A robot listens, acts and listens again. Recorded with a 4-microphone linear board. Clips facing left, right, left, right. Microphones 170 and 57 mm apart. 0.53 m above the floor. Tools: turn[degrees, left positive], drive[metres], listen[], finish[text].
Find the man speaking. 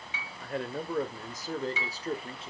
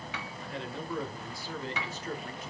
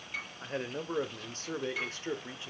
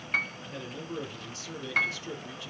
Thought: The man speaking: about 30° left or 150° left.
Action: turn[30]
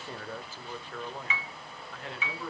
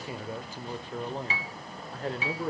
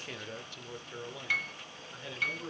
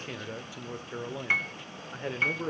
Thought: So it is at 45° right.
Action: turn[-45]
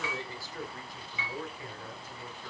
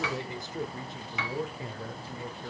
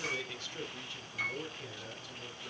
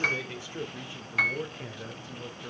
Thought: The man speaking is now 30° right.
Action: turn[-30]
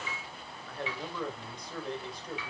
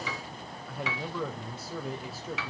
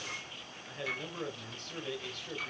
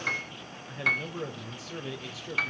Action: finish[Found it: a man speaking, straight ahead.]